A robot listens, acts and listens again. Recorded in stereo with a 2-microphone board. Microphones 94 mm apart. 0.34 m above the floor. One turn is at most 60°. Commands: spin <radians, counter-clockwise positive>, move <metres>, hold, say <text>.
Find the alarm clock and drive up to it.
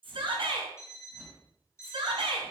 spin 0.52
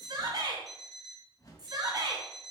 move 1.0
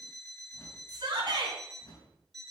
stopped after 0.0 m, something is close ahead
say Something is in my way. I am facing the alarm clock but have not reached it.